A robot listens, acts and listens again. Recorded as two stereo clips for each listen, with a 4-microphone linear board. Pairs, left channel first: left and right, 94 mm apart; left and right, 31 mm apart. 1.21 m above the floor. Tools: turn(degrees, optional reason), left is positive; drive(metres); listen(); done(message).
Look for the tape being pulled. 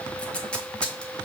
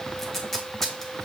turn(degrees=30)
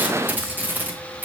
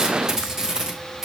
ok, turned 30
turn(degrees=-20, reason="So it is at 20° right.")
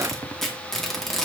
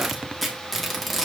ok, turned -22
done("Facing the tape being pulled, under 1 m away.")